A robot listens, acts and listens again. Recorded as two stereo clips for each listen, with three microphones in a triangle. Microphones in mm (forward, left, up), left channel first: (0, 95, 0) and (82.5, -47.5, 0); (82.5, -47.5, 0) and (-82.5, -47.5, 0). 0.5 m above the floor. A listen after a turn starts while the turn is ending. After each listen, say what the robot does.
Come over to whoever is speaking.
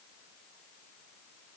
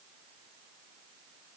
Keep listening.
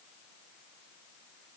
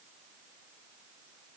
Keep listening.
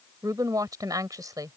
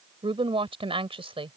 Turn 125° right.
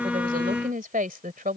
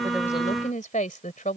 Turn 35° right.
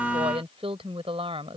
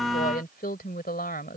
Turn 10° right.
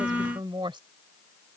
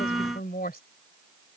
Drive 1.0 m forward.
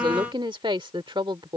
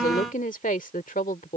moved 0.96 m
Drive 1.0 m forward.
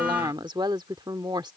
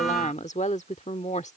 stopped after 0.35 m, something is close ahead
Turn 10° right.
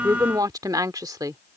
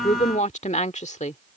Arrived at the woman speaking, straight ahead.